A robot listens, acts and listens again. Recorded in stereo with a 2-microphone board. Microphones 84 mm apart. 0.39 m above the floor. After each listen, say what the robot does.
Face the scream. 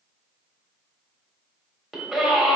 Turn 30° right.
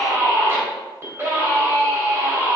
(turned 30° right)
Turn 145° right.
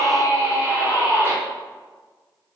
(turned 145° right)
Turn 35° right.
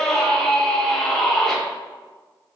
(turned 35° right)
Facing the scream, 1 to 2 m away.